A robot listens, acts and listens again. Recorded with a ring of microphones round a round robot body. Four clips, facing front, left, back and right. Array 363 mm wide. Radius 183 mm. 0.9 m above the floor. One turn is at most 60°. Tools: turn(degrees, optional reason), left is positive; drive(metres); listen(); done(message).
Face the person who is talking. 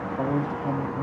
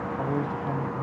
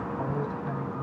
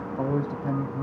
turn(degrees=-40, reason="The man speaking: 40° right.")
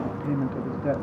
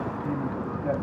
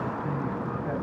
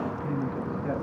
done("Facing the man speaking.")